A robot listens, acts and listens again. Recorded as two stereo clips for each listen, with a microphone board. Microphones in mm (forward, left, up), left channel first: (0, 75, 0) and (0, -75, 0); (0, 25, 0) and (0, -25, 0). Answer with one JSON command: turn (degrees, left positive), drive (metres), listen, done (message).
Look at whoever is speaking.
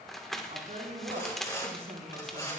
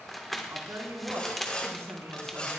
{"turn": -90}
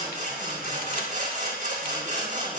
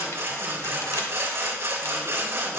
{"listen": true}
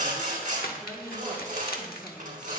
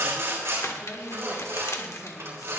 {"done": "Facing the woman speaking."}